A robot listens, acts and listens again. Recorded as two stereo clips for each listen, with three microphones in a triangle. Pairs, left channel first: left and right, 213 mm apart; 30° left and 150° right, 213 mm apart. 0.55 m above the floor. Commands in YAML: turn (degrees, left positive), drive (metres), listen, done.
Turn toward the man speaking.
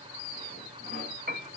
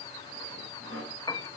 listen: true
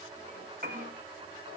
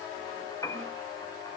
listen: true
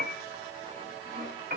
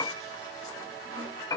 done: "I can't make out a man speaking, only a piano and sawing."